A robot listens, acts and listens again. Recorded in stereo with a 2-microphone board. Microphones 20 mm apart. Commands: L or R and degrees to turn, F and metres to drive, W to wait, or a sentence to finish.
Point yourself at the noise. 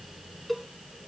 L30
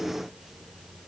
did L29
W
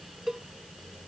R20
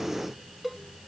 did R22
Facing the cowbell.